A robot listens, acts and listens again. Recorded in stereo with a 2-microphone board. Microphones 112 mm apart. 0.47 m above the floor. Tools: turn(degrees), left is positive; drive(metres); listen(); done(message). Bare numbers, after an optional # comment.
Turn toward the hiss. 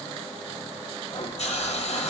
# The hiss: about 75° left or 105° left.
turn(75)
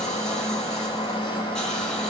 listen()
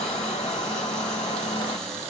listen()
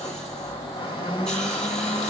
done("I heard a hiss, but can't make it out now. It was about straight ahead or 30° left.")